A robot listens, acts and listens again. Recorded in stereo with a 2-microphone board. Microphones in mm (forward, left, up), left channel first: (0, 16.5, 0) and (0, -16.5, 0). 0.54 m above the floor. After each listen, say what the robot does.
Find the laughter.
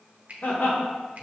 Turn 55° left.
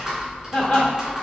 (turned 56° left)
Turn 40° left.
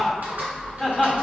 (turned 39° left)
Found it: laughter, straight ahead, 1 to 2 m away.